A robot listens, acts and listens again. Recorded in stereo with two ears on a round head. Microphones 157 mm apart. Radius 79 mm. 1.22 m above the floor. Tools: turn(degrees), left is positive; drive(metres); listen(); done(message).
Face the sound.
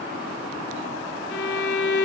turn(degrees=60)
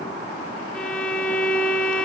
done("Found it: a violin, straight ahead.")